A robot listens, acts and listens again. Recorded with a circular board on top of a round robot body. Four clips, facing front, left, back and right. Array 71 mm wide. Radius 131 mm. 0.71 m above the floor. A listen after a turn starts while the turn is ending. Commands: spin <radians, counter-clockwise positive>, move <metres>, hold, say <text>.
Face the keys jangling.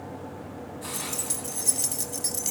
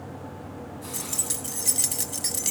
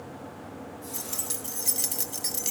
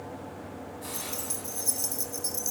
spin 1.75
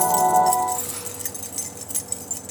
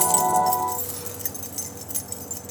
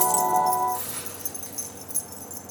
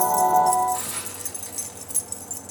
spin 0.26
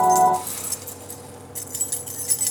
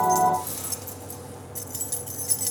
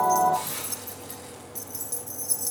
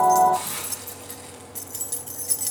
say Found it: keys jangling, straight ahead, under 1 m away.